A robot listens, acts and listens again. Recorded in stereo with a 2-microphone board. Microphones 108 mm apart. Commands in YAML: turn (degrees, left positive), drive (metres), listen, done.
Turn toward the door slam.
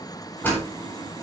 turn: 15
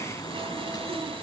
listen: true
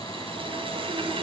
done: "I heard a door slam, but can't make it out now. It was about straight ahead or 150° left."